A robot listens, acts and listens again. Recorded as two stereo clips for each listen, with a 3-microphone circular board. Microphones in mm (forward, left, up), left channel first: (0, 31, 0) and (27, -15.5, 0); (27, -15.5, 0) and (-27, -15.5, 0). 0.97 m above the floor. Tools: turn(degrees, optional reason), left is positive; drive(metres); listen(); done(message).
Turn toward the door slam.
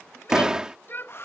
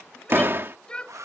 turn(degrees=-135, reason="The door slam: 135° right.")
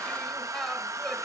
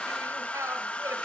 done("I heard a door slam from this way, but can't make it out now.")